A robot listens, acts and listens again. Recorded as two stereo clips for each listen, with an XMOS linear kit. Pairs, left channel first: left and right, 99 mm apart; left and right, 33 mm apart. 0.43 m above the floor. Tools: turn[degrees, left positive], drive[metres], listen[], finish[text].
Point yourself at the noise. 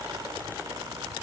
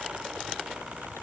Action: listen[]
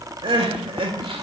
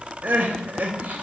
Thought: The crying: about 65° right or 115° right.
Action: turn[-65]
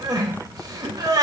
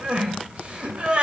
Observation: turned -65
Thought: So it is at 40° right.
Action: turn[-40]
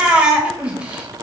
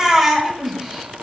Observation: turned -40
Thought: The crying is now 10° right.
Action: turn[-10]
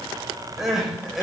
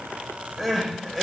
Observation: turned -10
Action: finish[Facing the crying, under 1 m away.]